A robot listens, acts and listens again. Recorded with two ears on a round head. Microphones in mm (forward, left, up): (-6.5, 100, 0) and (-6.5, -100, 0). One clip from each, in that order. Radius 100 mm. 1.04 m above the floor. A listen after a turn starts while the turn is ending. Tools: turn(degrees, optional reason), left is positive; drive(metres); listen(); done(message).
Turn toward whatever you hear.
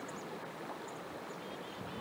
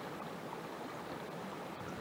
listen()
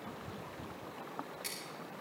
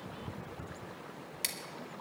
turn(degrees=-90)
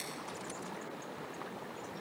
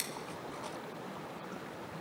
listen()
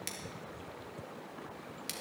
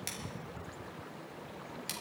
done("Found it: scissors, straight ahead, 1 to 2 m away.")